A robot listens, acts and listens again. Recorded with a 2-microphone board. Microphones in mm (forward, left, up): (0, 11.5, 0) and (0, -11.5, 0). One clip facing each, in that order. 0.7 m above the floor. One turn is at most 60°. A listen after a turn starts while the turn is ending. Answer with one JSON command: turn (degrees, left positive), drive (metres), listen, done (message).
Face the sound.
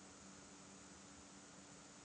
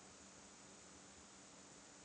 {"listen": true}
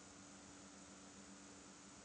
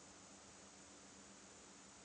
{"listen": true}
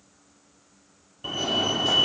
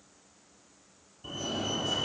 {"turn": 50}
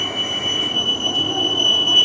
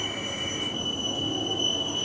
{"turn": 60}
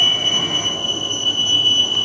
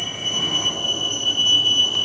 {"turn": 10}
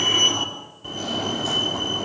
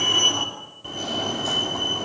{"done": "Facing the fire alarm."}